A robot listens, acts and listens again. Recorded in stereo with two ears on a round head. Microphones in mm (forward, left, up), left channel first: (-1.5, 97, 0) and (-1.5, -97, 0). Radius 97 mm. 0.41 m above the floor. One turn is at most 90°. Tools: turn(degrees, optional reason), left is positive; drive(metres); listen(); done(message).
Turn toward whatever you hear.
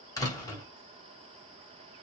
turn(degrees=15, reason="The door slam: about 15° left or 165° left.")
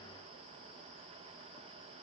listen()
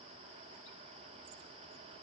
done("I heard a door slam, but can't make it out now. It was about straight ahead or 150° left.")